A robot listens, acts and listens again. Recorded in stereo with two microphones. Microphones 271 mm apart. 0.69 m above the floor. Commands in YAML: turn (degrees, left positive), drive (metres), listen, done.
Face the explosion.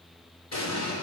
turn: 65
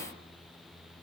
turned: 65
listen: true
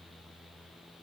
done: "I heard an explosion, but can't make it out now. It was about straight ahead or 50° left."